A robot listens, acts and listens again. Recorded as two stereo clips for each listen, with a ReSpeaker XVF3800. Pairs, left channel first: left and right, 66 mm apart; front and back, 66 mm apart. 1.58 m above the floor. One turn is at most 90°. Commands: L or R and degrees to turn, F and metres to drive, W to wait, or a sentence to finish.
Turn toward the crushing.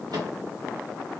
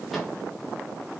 W
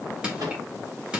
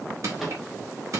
R90
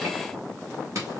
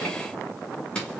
R75
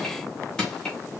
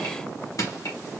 L10
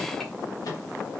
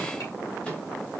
W
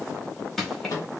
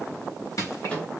Facing the crushing.